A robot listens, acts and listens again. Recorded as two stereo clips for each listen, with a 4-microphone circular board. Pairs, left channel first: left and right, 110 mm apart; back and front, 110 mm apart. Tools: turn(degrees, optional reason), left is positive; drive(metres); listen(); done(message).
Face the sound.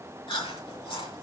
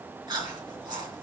turn(degrees=50, reason="The chewing: 50° left.")
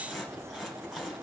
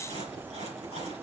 done("Found it: chewing, straight ahead.")